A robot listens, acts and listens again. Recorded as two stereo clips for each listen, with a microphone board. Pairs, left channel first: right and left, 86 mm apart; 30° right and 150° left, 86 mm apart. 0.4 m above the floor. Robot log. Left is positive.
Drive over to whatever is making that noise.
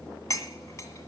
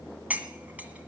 note: The cutlery clinking: 140° right.
cmd yaw -140
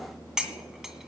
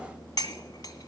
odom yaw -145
cmd fwd 1.0
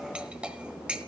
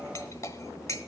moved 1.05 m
note: The cutlery clinking is now 15° left.
cmd yaw +15
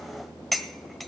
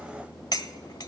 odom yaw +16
cmd fwd 1.0
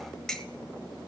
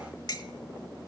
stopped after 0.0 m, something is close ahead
end: Arrived at the cutlery clinking, straight ahead.